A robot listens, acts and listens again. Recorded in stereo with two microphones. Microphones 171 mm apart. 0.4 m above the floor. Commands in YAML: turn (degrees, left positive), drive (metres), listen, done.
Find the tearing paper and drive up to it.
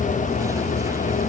listen: true
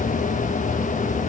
listen: true
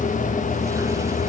done: "I can't make out tearing paper."